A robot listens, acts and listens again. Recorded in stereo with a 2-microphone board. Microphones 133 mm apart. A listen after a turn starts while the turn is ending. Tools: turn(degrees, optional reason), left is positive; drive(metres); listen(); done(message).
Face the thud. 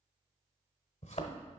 turn(degrees=60, reason="The thud: about 60° left or 120° left.")
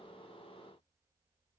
listen()
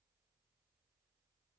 done("I heard a thud, but can't make it out now. It was about straight ahead or 60° left.")